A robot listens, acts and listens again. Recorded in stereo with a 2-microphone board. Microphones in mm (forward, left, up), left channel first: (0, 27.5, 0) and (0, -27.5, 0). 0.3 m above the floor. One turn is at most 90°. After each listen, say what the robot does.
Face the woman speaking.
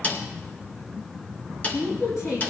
Turn 75° left.
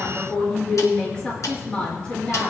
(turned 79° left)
Turn 20° left.
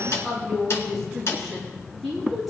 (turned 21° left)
Found it: a woman speaking, straight ahead.